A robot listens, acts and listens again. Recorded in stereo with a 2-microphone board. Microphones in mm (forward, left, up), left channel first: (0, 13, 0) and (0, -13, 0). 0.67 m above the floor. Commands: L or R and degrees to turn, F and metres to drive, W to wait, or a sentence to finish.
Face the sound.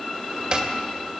R30
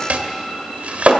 R115
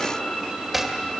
R10
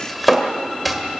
Found it: chopping, straight ahead, 1 to 2 m away.